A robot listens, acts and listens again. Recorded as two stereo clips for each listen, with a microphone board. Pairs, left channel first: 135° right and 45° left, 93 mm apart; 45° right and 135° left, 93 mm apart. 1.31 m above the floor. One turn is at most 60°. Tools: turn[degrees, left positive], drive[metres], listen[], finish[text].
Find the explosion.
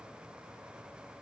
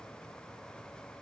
Action: listen[]
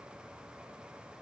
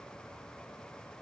Action: listen[]
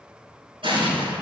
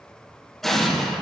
Thought: The explosion: 45° left.
Action: turn[45]
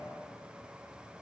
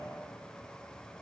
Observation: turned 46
Action: finish[Facing where the explosion came from. I can't hear it now.]